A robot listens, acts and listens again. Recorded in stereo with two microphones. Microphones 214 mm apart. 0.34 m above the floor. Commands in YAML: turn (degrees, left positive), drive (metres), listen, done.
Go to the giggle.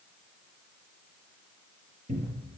listen: true
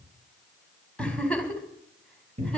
turn: 30
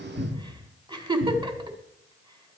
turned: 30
turn: -25
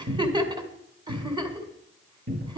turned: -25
turn: -25
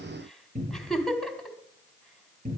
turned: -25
drive: 1.0
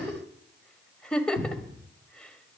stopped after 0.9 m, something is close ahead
done: "Arrived at the giggle, straight ahead."